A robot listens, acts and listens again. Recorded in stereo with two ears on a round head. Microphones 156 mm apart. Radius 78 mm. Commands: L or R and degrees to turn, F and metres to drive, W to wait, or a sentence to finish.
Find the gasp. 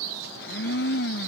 W
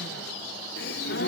L65
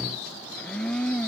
W
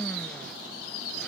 I heard a gasp, but can't make it out now. It was about straight ahead or 50° left.